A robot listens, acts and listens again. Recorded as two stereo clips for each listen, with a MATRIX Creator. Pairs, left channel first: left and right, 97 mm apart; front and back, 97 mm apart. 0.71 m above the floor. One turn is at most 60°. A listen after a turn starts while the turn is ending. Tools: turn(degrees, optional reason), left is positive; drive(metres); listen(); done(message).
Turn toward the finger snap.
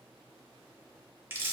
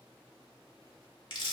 listen()
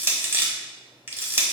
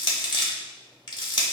listen()
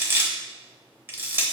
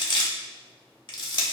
done("I can't make out a finger snap to turn to.")